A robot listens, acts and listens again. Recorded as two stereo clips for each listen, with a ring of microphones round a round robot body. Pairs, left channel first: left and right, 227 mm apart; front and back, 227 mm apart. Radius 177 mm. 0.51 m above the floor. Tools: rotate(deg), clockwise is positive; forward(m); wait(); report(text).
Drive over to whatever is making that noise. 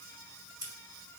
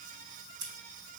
rotate(165)
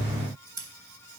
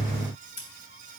rotate(15)
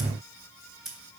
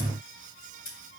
forward(1.0)
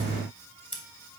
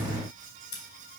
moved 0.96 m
forward(1.0)
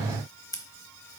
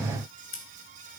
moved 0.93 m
rotate(-15)
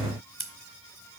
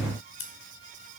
forward(1.0)
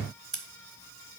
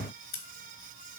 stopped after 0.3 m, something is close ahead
report("I am next to the scissors.")